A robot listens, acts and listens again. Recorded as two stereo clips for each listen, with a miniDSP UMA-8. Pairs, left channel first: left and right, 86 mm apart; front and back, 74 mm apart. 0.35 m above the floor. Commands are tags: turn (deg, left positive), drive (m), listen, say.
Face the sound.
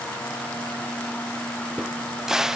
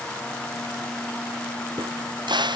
<turn deg="-175"/>
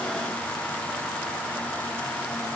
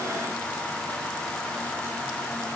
<say>I heard a crack from this way, but can't make it out now.</say>